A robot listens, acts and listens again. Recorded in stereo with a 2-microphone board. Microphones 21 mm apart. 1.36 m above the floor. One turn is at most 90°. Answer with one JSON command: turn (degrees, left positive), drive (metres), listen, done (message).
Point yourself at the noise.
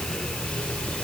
{"listen": true}
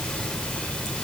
{"listen": true}
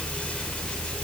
{"done": "I can't make out anything."}